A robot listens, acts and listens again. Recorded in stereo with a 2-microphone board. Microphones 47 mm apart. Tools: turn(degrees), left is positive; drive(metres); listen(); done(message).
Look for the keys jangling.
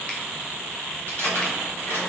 turn(degrees=60)
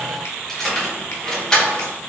turn(degrees=15)
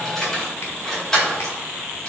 turn(degrees=15)
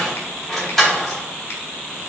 done("Facing the keys jangling, 2 to 4 m away.")